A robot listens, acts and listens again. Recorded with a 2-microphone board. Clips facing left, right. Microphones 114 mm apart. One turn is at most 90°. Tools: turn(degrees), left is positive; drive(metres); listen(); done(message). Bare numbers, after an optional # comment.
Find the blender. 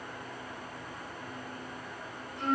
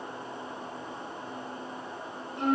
listen()
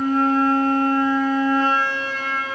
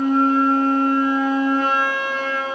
listen()
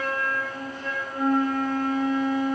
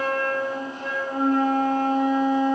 done("I can't make out a blender to turn to.")